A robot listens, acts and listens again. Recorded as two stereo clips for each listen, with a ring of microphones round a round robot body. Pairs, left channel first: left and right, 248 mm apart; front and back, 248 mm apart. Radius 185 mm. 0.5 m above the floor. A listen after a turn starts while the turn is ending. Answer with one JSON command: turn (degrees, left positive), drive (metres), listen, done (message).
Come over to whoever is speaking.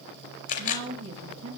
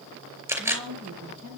{"turn": -140}
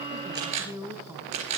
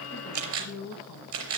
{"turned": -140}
{"turn": -10}
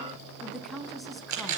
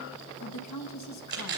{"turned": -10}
{"drive": 1.0}
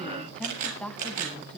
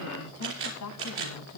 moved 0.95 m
{"drive": 1.0}
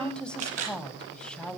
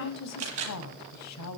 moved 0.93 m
{"drive": 1.0}
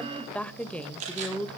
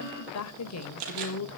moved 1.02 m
{"drive": 1.0}
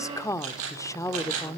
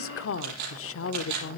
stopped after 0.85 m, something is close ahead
{"turn": 15}
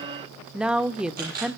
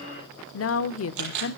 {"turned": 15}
{"done": "I am next to the woman speaking."}